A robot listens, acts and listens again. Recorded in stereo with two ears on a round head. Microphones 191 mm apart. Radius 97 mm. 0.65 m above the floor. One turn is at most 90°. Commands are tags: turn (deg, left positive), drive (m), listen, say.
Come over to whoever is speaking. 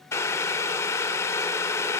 <listen/>
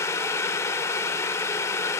<listen/>
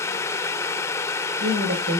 <turn deg="-65"/>
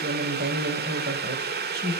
<turn deg="-45"/>
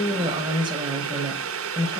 <turn deg="-20"/>
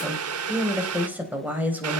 <turn deg="-10"/>
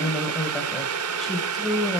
<drive m="1.0"/>
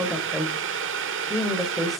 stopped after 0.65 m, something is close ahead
<say>Blocked. The woman speaking is further on, straight ahead.</say>